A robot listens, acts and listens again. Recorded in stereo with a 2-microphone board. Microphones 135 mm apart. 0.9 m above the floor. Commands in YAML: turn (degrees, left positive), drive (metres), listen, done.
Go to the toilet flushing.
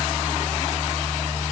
listen: true
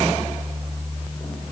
listen: true
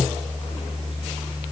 done: "I can't make out a toilet flushing to turn to."